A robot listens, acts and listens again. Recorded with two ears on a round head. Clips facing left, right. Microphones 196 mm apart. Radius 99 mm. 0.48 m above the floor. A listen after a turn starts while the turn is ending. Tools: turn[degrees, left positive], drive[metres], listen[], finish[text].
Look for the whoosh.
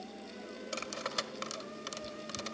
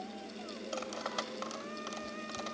Action: listen[]
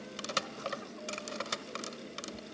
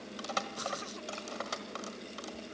Action: listen[]
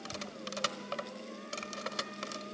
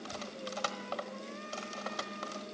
Action: finish[I can't make out a whoosh, only cutlery clinking.]